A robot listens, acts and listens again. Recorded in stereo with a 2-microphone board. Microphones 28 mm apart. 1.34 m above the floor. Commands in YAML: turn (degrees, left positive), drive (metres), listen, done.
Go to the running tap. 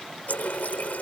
turn: 70
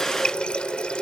turn: 40
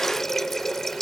turn: 10
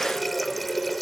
drive: 1.0
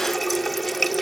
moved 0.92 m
drive: 1.0
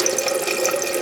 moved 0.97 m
drive: 1.0
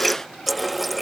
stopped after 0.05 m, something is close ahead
done: "Arrived at the running tap, straight ahead."